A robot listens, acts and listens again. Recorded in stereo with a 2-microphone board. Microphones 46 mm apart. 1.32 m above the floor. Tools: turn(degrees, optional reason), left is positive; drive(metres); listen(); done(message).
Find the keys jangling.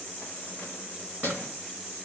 turn(degrees=55, reason="The keys jangling: about 55° left or 125° left.")
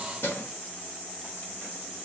turn(degrees=55, reason="So it is at 55° left.")
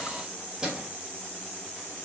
turn(degrees=-15, reason="The keys jangling is now 15° right.")
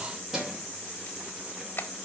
turn(degrees=-10, reason="The keys jangling is now 10° right.")
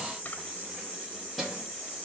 done("Found it: keys jangling, straight ahead, over 4 m away.")